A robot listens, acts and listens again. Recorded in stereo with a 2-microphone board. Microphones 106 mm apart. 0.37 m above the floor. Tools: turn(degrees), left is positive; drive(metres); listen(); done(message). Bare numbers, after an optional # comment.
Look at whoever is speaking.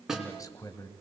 # The man speaking: about 30° left or 150° left.
turn(30)
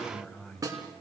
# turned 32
# So it is at 10° left.
turn(10)
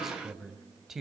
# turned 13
done("Found it: a man speaking, straight ahead.")